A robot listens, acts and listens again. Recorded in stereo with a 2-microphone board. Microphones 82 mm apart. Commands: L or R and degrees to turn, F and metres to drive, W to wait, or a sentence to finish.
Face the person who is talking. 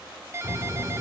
L30
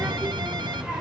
R10
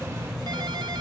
Found it: a child speaking, straight ahead, 2 to 4 m away.